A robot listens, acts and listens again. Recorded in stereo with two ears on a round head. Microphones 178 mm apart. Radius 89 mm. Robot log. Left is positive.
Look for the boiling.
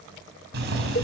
note: The boiling: about 55° right or 125° right.
cmd yaw -55
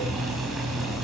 end: Facing the boiling, over 4 m away.